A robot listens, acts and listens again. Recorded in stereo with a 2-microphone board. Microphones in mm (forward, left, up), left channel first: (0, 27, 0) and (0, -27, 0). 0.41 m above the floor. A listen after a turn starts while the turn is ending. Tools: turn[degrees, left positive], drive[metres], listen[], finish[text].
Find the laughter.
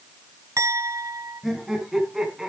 Action: turn[-30]
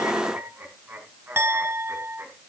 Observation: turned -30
Thought: So it is at 135° right.
Action: turn[-135]
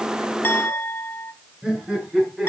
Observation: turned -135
Thought: The laughter is now 15° right.
Action: turn[-15]
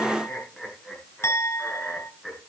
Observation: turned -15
Action: finish[Facing the laughter, over 4 m away.]